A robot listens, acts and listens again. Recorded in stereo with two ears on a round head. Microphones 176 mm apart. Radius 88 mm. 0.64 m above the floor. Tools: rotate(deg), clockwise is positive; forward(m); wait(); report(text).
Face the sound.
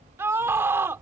rotate(30)
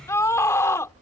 rotate(-15)
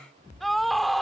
report("Facing the scream.")